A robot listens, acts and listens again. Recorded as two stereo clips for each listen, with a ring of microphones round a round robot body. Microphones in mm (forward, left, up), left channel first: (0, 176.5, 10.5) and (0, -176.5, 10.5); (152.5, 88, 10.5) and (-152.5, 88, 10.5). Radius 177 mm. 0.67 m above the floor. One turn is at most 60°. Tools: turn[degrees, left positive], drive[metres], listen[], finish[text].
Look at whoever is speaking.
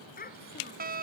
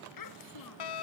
Thought: The child speaking: 20° left.
Action: turn[20]
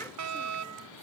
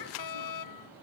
Action: listen[]
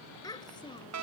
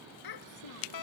Thought: The child speaking is now 10° left.
Action: turn[10]
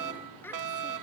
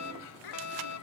Action: finish[Found it: a child speaking, straight ahead.]